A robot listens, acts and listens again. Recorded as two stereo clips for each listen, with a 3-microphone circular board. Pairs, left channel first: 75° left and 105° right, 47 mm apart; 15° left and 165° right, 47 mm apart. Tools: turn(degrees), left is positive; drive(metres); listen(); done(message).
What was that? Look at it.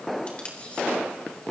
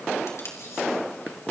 turn(degrees=10)
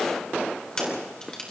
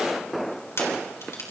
done("Facing the tape being pulled.")